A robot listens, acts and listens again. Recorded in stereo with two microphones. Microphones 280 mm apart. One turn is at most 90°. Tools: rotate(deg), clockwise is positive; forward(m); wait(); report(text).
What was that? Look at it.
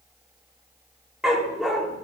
rotate(-30)
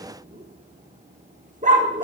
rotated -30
rotate(30)
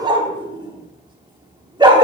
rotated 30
rotate(20)
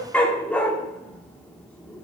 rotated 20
report("Facing the dog barking, 1 to 2 m away.")